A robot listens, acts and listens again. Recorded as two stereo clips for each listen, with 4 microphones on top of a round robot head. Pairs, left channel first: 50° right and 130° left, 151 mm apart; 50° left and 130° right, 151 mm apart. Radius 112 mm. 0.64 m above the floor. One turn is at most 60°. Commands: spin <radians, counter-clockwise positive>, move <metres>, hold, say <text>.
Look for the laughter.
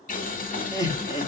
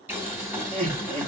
spin -1.05
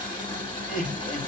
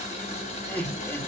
spin -0.52
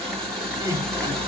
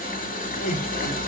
spin 0.26
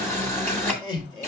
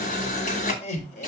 spin 0.17
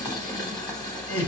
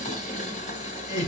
spin 0.17
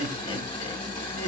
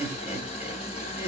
say Facing the laughter, 2 to 4 m away.